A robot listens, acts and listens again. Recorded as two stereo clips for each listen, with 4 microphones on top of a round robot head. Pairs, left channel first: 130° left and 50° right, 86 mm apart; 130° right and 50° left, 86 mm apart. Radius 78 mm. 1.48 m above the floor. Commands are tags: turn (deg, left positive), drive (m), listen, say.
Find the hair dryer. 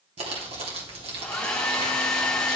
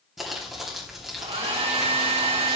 <turn deg="50"/>
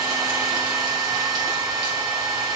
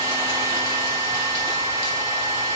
<say>Facing the hair dryer, 2 to 4 m away.</say>